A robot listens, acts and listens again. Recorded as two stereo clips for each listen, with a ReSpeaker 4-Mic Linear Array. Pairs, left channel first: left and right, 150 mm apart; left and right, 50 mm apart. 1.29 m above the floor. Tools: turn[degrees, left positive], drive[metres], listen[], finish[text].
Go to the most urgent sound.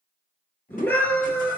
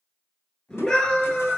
Action: turn[30]
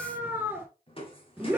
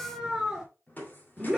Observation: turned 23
Thought: So it is at 10° right.
Action: turn[-10]
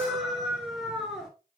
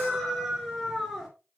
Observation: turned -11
Action: drive[1.0]
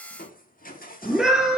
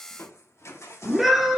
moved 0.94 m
Action: drive[1.0]
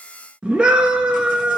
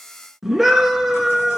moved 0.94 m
Action: drive[1.0]
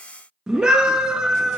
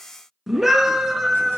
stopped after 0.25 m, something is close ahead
Action: finish[Arrived at the scream, straight ahead.]